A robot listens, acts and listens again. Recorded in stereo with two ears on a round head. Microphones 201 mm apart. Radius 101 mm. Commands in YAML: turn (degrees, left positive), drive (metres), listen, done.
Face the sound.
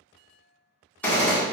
turn: 30
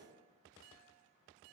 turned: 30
listen: true
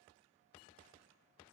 done: "I heard a gunshot, but can't make it out now. It was about 25° right or 145° left."